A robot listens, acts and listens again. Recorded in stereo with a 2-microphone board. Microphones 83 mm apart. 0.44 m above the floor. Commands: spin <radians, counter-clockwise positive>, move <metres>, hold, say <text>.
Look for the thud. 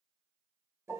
hold
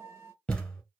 spin 0.52
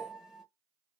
hold
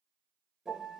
say I heard a thud, but can't make it out now. It was about 15° right or 135° left.